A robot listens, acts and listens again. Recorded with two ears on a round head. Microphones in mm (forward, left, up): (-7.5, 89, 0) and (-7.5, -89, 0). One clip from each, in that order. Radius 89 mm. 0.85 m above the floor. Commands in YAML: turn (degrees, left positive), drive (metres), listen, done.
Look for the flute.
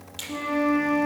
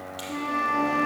turn: -20
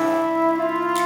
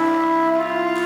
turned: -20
turn: -140
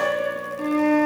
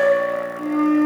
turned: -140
turn: 45
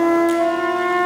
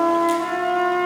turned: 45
turn: 10
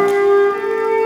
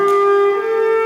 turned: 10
done: "Found it: a flute, straight ahead."